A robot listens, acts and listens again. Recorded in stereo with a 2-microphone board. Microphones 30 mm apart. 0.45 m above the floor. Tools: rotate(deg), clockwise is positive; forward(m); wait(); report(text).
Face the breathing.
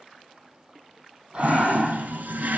rotate(35)
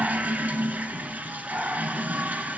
rotate(110)
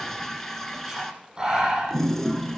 rotate(25)
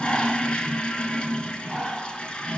report("Facing the breathing.")